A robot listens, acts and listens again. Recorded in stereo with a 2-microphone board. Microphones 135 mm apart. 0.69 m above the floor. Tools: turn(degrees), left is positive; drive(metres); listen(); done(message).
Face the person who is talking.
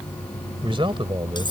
turn(degrees=-40)
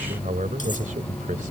turn(degrees=-95)
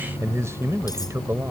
turn(degrees=-20)
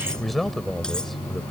done("Facing the man speaking.")